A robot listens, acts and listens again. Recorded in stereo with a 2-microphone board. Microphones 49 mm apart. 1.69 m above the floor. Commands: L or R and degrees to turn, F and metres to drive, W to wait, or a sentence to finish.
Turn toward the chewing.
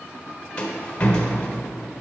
W
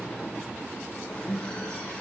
W
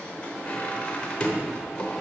I can't make out chewing to turn to.